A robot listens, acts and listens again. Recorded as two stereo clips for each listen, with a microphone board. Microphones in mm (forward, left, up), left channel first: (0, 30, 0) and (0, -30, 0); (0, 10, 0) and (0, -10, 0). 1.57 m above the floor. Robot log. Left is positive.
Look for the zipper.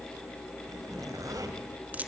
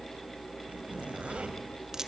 note: The zipper: about 75° right or 105° right.
cmd yaw -75
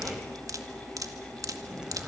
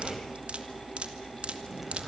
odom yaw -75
cmd idle
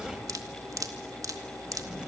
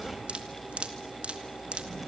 note: So it is at 15° right.
cmd yaw -15
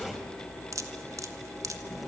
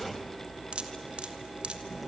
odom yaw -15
end: Facing the zipper, 2 to 4 m away.